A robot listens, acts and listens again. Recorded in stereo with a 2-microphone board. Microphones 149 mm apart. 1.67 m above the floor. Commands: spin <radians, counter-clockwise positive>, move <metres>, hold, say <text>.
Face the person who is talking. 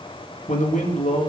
spin 0.96
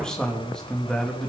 say Facing the man speaking, 2 to 4 m away.